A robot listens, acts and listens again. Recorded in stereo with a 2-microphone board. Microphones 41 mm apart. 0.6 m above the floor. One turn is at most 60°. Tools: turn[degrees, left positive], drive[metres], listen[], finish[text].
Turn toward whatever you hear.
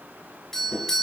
Action: turn[30]
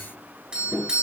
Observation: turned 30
Thought: So it is at 20° right.
Action: turn[-20]
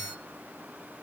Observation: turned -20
Action: listen[]
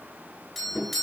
Action: finish[Found it: a doorbell, straight ahead.]